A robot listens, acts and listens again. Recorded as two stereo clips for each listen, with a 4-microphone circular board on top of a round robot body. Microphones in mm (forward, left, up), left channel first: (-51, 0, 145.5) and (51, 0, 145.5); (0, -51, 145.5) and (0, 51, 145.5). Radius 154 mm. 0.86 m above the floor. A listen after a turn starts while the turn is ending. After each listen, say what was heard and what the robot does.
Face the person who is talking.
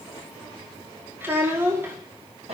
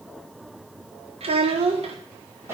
The child speaking: 70° left. Turn 70° left.
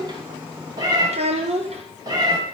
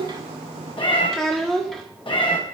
Found it: a child speaking, straight ahead, 1 to 2 m away.